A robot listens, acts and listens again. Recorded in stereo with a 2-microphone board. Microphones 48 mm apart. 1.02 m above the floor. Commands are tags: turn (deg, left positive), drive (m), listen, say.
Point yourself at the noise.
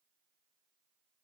<listen/>
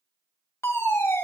<turn deg="65"/>
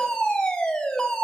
<turn deg="15"/>
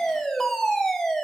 <say>Facing the fire alarm, 2 to 4 m away.</say>